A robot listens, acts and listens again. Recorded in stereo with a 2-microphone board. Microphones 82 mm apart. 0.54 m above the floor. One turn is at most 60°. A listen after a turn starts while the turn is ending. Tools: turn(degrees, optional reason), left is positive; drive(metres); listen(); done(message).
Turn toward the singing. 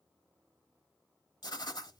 listen()
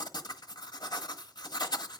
listen()
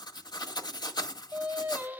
turn(degrees=-20, reason="The singing: about 20° right or 160° right.")
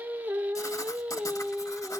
turn(degrees=-30)
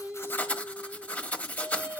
turn(degrees=-25, reason="The singing: about 25° right or 155° right.")
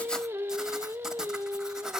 turn(degrees=-30, reason="The singing: about 30° right or 150° right.")
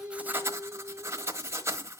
turn(degrees=-25, reason="The singing: about 25° right or 155° right.")
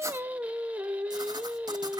turn(degrees=-20, reason="The singing: about 20° right or 160° right.")
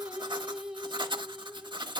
turn(degrees=-30)
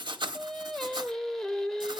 done("Found it: singing, straight ahead.")